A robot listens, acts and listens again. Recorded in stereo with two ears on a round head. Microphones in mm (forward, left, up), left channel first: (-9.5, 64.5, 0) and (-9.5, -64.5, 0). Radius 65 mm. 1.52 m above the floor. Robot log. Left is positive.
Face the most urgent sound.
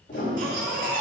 note: The baby crying: about 65° right or 115° right.
cmd yaw -65
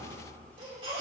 note: So it is at 40° right.
cmd yaw -40
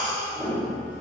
end: Found it: a baby crying, straight ahead.